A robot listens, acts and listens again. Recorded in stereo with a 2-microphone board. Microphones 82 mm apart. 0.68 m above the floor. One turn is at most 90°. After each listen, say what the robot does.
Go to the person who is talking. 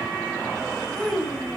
Turn 30° left.
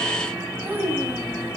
Turn 25° right.
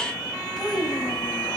Drive 1.0 m forward.
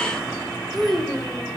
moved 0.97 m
Drive 1.0 m forward.
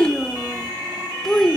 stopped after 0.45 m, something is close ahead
Arrived at the child speaking, straight ahead.